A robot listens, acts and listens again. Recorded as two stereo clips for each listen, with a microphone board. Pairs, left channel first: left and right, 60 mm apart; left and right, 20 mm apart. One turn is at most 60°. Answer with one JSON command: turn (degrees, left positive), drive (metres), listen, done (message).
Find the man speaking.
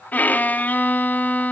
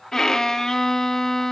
{"listen": true}
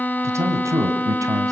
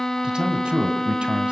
{"turn": -60}
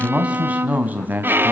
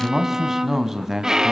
{"turn": -30}
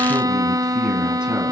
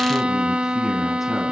{"listen": true}
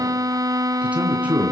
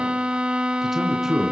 {"turn": -20}
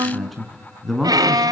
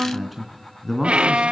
{"done": "Facing the man speaking, 2 to 4 m away."}